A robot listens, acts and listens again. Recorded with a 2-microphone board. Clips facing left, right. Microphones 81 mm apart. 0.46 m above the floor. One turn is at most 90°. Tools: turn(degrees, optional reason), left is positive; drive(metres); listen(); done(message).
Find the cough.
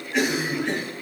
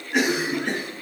turn(degrees=-65, reason="The cough: about 65° right or 115° right.")
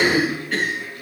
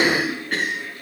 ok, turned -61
turn(degrees=-50, reason="So it is at 50° right.")
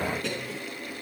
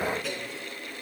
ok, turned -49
done("Found it: a cough, straight ahead, over 4 m away.")